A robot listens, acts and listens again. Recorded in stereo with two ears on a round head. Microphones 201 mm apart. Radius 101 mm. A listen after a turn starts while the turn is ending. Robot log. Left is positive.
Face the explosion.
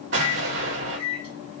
note: The explosion: about 55° right or 125° right.
cmd yaw -55
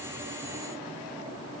cmd idle
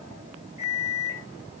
end: I heard an explosion, but can't make it out now. It was about straight ahead or 70° right.